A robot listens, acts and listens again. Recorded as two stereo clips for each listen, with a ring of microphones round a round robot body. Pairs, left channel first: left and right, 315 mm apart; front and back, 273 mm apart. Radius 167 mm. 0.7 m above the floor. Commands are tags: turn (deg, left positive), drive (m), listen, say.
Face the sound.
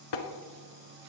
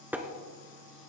<turn deg="95"/>
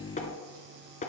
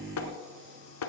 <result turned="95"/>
<turn deg="20"/>
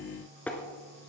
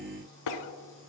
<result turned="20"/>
<say>Facing the tapping, 1 to 2 m away.</say>